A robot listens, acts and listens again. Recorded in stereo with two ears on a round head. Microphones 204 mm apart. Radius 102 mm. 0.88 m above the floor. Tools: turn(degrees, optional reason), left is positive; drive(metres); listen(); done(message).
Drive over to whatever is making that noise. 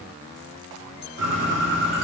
turn(degrees=-50, reason="The bird: about 50° right or 130° right.")
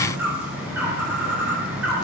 drive(metres=1.0)
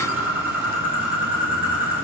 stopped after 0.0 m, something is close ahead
turn(degrees=-10, reason="The bird is now 10° right.")
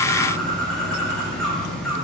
done("Blocked. The bird is further on, straight ahead.")